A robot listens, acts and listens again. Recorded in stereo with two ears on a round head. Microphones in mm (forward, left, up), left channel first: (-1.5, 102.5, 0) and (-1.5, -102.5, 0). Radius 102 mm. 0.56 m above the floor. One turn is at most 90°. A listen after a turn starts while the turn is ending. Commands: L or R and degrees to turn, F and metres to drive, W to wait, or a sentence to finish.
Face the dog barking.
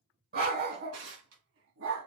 R60
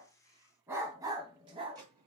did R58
R25
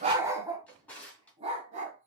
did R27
R30
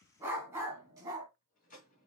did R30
R15
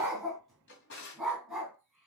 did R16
Facing the dog barking.